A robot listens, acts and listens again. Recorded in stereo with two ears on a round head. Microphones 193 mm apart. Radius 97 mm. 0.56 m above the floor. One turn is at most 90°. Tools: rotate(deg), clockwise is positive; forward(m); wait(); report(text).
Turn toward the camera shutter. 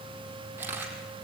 rotate(30)
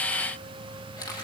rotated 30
rotate(-15)
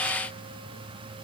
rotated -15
wait()
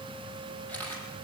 report("Found it: a camera shutter, straight ahead.")